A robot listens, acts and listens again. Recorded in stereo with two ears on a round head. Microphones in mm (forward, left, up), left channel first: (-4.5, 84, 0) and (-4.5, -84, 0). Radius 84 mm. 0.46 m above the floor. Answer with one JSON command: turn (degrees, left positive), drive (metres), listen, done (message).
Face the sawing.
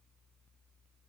{"listen": true}
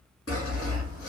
{"turn": 90}
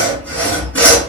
{"turn": 10}
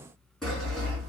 {"done": "Facing the sawing, 1 to 2 m away."}